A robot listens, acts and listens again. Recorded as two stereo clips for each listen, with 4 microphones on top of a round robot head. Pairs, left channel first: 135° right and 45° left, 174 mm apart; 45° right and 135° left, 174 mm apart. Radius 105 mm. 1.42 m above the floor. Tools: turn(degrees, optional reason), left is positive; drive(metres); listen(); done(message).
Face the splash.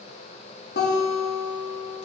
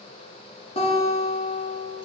listen()
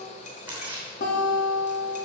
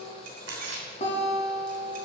turn(degrees=130, reason="The splash: 130° left.")
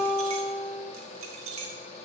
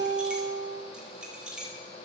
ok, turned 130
done("Facing where the splash came from. I can't hear it now.")